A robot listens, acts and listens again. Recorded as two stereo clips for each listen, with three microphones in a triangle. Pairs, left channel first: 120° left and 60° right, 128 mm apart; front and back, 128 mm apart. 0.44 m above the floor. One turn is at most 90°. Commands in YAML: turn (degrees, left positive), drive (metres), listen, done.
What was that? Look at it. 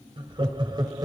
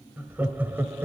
turn: -90
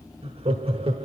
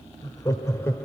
turn: -65
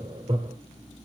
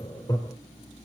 turn: -50
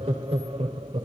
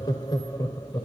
turn: -55
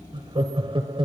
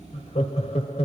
turn: -20
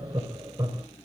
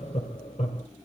done: "Found it: laughter, straight ahead, 1 to 2 m away."